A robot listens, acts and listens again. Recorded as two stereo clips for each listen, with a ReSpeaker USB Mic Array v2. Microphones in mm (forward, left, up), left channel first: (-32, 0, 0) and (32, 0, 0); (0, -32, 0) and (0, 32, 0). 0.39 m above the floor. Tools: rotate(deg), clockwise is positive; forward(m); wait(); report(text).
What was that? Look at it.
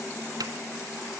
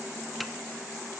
wait()
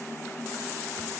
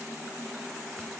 wait()
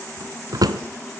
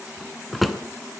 report("Facing the drawer, 1 to 2 m away.")